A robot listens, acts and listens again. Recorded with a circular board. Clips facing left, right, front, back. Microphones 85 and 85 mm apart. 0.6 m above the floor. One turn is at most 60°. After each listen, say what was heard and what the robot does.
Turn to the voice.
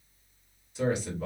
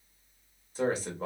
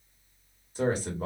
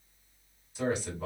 The man speaking: 40° right. Turn 40° right.
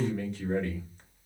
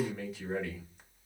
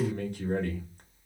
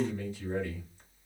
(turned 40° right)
Found it: a man speaking, straight ahead.